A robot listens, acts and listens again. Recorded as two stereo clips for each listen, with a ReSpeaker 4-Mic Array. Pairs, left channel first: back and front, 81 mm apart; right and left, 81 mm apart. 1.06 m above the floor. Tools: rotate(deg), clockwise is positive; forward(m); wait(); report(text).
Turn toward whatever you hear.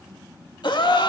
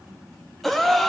rotate(175)
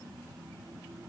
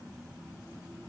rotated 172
report("I heard a gasp from this way, but can't make it out now.")